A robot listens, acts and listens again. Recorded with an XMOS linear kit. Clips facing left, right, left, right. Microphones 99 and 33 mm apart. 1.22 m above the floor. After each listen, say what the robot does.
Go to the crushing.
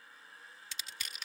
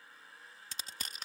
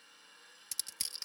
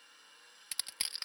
Turn 40° right.
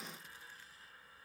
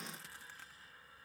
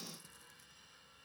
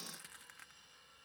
Keep listening.
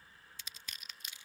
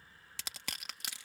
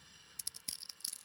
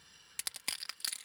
Turn 100° right.
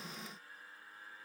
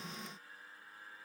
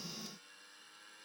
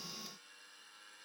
Keep listening.
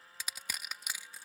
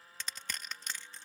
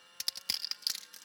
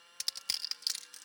Turn 10° left.
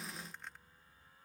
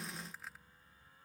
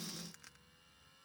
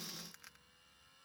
Keep listening.
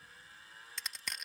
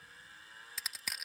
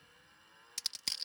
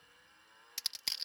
Drive 1.0 m forward.
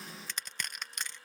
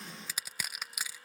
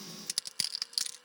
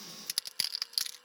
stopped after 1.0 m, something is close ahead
Turn 10° right.
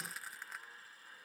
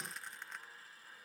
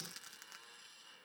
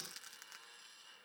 Keep listening.
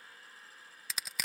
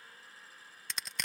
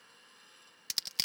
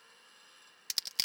Arrived at the crushing, straight ahead.